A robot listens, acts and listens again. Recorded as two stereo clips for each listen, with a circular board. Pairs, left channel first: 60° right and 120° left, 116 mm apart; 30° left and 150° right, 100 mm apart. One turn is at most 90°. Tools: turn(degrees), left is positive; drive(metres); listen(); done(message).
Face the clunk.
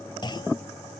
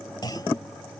turn(degrees=-15)
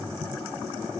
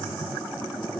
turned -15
done("Facing where the clunk came from. I can't hear it now.")